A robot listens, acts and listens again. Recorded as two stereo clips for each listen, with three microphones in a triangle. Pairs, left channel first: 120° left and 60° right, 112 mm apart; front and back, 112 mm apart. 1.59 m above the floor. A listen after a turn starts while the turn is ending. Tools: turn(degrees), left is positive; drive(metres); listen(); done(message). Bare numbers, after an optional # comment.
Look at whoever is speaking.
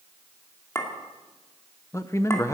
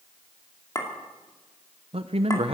# The man speaking: straight behind.
turn(180)
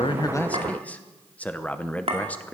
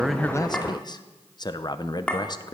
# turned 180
# The man speaking is now 45° left.
turn(45)
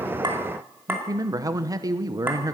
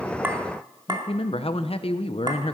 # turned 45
# The man speaking is now 10° right.
turn(-10)
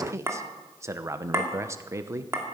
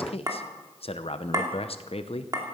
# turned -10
done("Facing the man speaking, under 1 m away.")